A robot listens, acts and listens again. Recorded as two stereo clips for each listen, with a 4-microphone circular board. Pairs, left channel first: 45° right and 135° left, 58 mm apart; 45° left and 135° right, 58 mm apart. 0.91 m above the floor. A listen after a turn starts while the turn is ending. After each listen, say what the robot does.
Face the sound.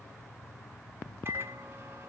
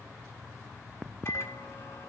Turn 85° left.
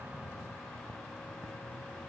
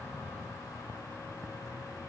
Keep listening.
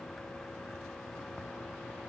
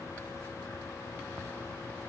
Keep listening.
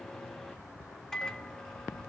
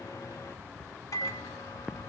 Turn 30° left.
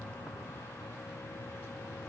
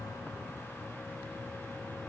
Keep listening.
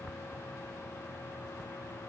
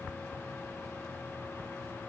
Turn 10° right.
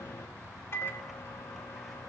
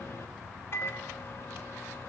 Facing the microwave.